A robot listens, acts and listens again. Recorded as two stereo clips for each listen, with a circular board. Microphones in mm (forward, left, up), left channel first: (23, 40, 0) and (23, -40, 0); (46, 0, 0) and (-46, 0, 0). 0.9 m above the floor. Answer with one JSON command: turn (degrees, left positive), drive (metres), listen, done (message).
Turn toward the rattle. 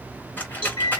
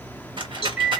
{"turn": 155}
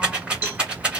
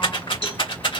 {"turn": -15}
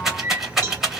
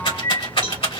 {"done": "Facing the rattle, 1 to 2 m away."}